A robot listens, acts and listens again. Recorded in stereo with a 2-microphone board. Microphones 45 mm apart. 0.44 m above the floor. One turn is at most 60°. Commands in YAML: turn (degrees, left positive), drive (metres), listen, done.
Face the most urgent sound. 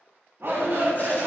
turn: -60
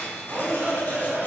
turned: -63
turn: -50
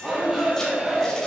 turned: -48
done: "Facing the shout."